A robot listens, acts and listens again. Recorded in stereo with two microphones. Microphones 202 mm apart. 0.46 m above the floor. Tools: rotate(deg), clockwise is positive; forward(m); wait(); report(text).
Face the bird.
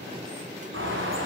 rotate(90)
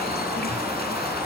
report("Facing the bird, over 4 m away.")